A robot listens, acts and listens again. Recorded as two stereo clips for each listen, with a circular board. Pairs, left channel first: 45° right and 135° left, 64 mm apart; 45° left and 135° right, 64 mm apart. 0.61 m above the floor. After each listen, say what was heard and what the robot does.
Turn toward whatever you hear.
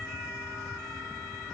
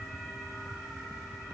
Keep listening.
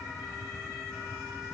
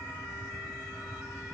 Keep listening.
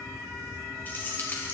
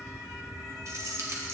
The keys jangling: 100° right. Turn 100° right.
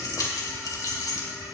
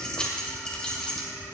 The keys jangling is now 30° right. Turn 30° right.
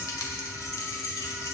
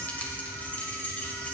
The keys jangling is now 20° right. Turn 20° right.
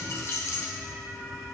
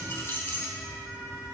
Found it: keys jangling, straight ahead, 2 to 4 m away.